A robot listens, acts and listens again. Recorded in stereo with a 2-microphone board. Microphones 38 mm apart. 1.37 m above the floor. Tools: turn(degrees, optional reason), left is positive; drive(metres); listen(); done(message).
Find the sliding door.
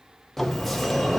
turn(degrees=30)
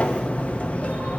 turn(degrees=140, reason="So it is at 140° left.")
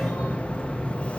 turn(degrees=30, reason="The sliding door is now 30° left.")
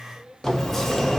done("Found it: a sliding door, straight ahead.")